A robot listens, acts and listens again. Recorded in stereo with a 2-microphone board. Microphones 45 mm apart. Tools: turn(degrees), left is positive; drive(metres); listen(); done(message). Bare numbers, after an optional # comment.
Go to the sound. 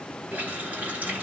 # The running tap: about 35° right or 145° right.
turn(-35)
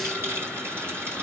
# So it is at 110° right.
turn(-110)
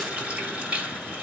# The running tap is now 30° right.
turn(-30)
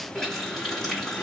drive(1.0)
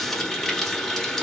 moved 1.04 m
# The running tap is now 10° left.
turn(10)
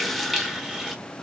drive(1.0)
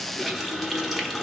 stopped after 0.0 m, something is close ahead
done("Arrived at the running tap, straight ahead.")